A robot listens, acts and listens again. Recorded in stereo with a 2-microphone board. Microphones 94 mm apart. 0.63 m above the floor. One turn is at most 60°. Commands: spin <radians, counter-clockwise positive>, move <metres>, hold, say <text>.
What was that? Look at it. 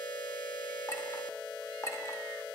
spin 0.61
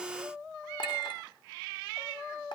spin 1.05
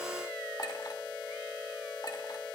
spin 0.87
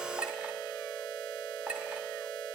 spin -0.26
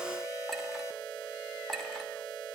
say Found it: a clink, straight ahead, 1 to 2 m away.